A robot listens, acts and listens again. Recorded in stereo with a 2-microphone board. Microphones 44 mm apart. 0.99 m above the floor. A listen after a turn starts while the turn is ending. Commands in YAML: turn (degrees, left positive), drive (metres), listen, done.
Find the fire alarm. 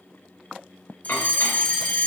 turn: 35
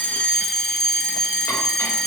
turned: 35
done: "Found it: a fire alarm, straight ahead, 2 to 4 m away."